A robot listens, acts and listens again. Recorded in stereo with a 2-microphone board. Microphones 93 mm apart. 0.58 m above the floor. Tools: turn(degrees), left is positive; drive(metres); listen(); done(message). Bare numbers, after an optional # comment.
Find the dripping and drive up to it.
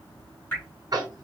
# The dripping: about 20° left or 160° left.
turn(20)
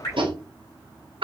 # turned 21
# So it is at 140° left.
turn(140)
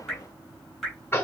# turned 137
drive(1.0)
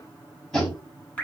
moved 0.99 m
# The dripping is now 15° left.
turn(15)
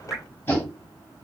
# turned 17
drive(1.0)
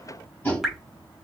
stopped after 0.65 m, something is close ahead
done("Arrived at the dripping, straight ahead.")